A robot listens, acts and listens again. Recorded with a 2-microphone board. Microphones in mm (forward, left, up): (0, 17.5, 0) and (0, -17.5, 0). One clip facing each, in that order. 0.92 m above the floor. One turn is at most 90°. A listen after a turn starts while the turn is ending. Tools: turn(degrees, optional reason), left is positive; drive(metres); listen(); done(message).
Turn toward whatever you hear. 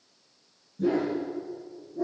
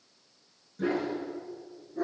turn(degrees=-70, reason="The dog barking: about 70° right or 110° right.")
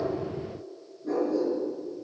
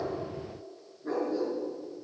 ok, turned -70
turn(degrees=-45, reason="So it is at 45° right.")
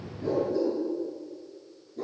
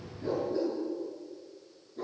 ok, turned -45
turn(degrees=-15, reason="The dog barking is now 15° right.")
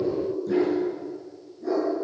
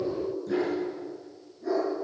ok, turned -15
done("Facing the dog barking, over 4 m away.")